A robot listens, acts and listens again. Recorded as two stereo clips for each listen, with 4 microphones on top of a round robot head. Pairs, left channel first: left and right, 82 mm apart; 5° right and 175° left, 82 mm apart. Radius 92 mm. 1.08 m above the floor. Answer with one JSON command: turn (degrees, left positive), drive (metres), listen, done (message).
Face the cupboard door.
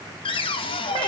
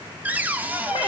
{"turn": 100}
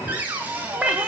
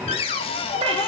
{"turn": -15}
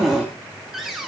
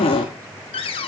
{"done": "Facing the cupboard door."}